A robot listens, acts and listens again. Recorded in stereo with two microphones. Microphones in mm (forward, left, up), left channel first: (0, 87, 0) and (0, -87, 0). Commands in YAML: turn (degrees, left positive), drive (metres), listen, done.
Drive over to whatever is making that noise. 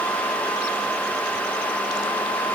listen: true
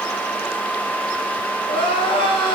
turn: 30
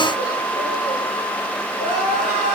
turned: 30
turn: 125
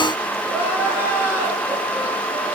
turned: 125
turn: -10
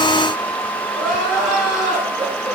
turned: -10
drive: 1.0
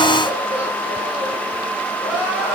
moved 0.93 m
turn: -10
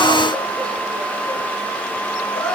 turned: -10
drive: 1.0
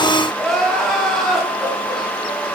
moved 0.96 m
drive: 1.0
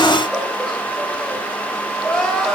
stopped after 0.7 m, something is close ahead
done: "I am next to the crying."